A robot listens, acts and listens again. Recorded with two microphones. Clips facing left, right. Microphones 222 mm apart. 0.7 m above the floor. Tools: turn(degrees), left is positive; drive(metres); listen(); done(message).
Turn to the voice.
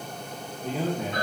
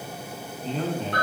turn(degrees=30)
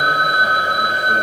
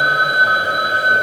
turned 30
listen()
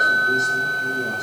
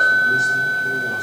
listen()
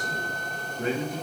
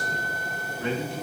turn(degrees=135)
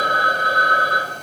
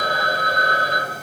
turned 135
listen()
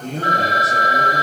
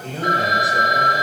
turn(degrees=45)
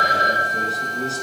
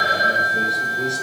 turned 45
done("Facing the man speaking.")